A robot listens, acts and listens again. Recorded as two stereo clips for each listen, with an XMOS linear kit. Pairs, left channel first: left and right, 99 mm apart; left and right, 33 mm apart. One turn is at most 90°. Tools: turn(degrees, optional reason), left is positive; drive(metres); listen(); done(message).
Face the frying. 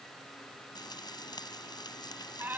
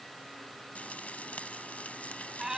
turn(degrees=45, reason="The frying: about 45° left or 135° left.")
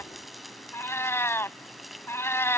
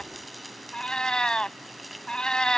done("Facing the frying.")